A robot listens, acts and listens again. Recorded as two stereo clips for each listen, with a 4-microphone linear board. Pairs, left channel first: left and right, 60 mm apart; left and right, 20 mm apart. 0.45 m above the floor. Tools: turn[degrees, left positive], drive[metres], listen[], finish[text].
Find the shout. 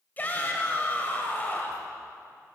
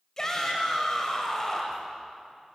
Thought: The shout: about 30° left or 150° left.
Action: turn[30]
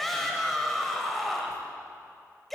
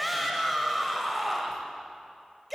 Action: finish[Found it: a shout, straight ahead, 2 to 4 m away.]